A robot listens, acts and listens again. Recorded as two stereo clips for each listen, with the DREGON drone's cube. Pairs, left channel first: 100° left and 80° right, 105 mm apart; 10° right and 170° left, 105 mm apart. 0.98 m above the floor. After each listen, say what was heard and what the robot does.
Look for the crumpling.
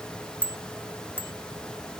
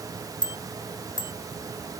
Keep listening.
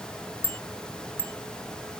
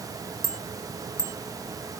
Keep listening.
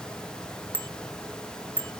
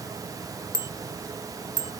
I can't make out crumpling, only a bicycle bell.